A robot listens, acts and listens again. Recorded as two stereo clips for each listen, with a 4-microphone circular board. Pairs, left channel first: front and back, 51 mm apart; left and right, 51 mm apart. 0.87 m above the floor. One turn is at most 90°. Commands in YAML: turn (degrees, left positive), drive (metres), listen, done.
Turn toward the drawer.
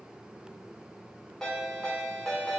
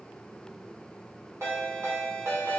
listen: true
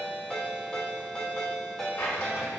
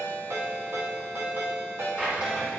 turn: -25
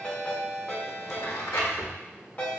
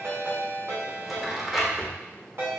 done: "Facing the drawer, 1 to 2 m away."